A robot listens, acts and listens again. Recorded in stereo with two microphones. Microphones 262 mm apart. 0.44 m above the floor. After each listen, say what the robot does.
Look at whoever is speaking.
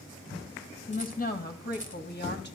Turn 40° left.
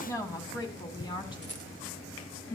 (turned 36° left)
Turn 20° left.
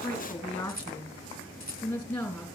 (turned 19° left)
Facing the woman speaking.